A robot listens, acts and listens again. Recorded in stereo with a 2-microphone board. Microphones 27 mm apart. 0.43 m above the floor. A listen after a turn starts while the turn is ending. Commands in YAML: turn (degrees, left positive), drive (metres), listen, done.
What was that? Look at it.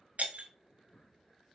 turn: -70
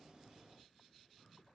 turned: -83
listen: true
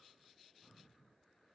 done: "I heard breaking glass, but can't make it out now. It was about 10° left or 25° right."